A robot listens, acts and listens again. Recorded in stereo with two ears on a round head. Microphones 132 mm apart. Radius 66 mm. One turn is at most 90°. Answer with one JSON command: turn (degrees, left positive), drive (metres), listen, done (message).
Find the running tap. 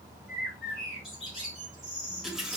{"turn": -30}
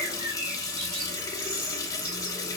{"turn": 25}
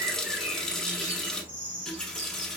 {"done": "Found it: a running tap, straight ahead, under 1 m away."}